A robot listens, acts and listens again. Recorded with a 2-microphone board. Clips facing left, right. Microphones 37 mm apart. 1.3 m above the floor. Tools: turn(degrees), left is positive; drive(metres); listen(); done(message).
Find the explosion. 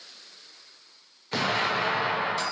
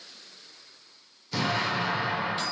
turn(degrees=45)
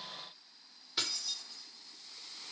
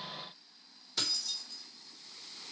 listen()
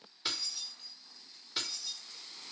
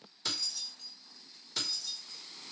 done("I heard an explosion, but can't make it out now. It was about straight ahead or 90° left.")